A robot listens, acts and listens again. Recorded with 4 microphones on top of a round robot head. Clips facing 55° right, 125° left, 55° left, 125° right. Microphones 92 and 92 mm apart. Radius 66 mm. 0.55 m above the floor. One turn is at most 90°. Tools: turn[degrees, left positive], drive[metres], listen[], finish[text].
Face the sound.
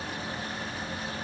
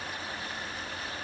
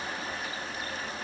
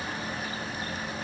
Action: listen[]
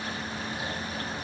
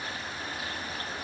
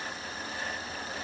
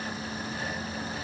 Action: listen[]
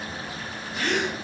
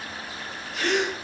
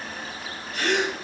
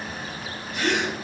Thought: The gasp: 105° left.
Action: turn[90]
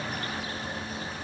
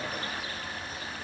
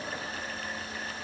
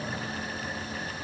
Thought: Nothing new. It was at 15° left.
Action: turn[15]
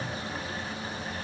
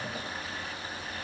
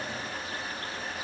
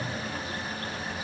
Action: finish[I heard a gasp from this way, but can't make it out now.]